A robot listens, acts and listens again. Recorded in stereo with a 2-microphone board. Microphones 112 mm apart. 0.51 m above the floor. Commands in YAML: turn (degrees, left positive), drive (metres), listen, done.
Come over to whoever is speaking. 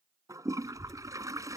turn: 90
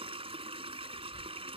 turn: -15
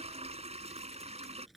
drive: 1.0
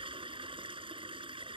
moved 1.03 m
listen: true
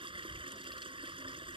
drive: 1.0
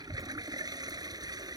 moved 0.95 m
drive: 1.0
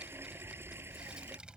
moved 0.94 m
turn: -10
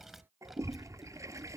drive: 1.0
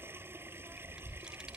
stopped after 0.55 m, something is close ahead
done: "Arrived at the child speaking, straight ahead."